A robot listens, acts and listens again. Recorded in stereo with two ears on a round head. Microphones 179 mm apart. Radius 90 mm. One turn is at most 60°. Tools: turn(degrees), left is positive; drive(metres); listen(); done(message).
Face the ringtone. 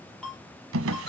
turn(degrees=30)
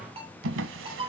turn(degrees=-25)
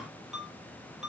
done("Found it: a ringtone, straight ahead, over 4 m away.")